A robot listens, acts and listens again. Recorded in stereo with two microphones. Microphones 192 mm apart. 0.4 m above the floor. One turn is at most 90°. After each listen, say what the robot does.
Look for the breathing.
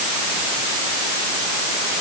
Keep listening.
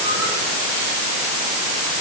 Keep listening.
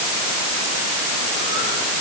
I can't make out breathing to turn to.